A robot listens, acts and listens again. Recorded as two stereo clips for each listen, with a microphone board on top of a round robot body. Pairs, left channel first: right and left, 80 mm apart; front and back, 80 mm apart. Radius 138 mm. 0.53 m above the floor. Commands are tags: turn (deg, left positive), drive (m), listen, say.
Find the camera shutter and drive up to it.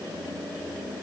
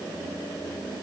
<listen/>
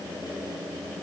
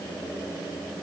<listen/>
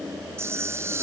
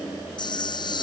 <turn deg="30"/>
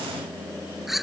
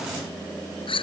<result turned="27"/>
<drive m="1.0"/>
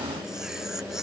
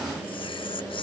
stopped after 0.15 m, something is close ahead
<listen/>
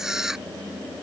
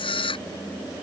<say>Something is in my way. I am facing the camera shutter but have not reached it.</say>